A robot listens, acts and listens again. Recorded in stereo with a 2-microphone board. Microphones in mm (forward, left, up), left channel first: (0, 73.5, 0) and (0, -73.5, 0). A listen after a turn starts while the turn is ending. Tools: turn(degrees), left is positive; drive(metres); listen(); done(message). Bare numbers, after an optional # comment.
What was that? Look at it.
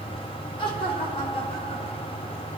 # The laughter: about 40° left or 140° left.
turn(40)
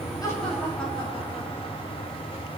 done("Found it: laughter, straight ahead.")